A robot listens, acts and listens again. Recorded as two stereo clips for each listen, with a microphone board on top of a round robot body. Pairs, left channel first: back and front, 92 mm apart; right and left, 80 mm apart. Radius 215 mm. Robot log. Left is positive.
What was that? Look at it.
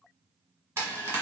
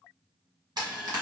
note: The frying: 60° left.
cmd yaw +60
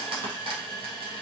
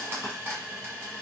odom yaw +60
note: The frying is now 25° left.
cmd yaw +25
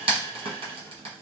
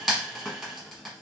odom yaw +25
end: Found it: frying, straight ahead.